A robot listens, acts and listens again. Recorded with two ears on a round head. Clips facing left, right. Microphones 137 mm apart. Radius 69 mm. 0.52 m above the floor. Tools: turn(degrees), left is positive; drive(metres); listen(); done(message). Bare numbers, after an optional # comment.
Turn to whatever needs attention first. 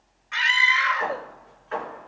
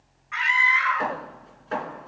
# The scream: about 40° left or 140° left.
turn(40)
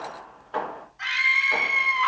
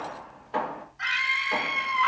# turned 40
done("Facing the scream.")